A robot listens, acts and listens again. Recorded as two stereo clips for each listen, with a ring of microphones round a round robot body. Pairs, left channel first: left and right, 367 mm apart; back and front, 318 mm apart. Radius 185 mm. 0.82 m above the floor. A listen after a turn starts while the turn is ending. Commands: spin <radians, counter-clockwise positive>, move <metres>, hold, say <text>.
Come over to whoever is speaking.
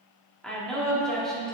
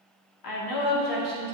spin 3.14
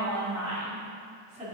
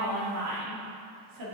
spin -0.35
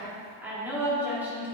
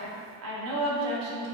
move 1.0
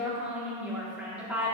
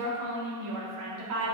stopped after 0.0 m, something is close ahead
say Blocked. The woman speaking is further on, straight ahead.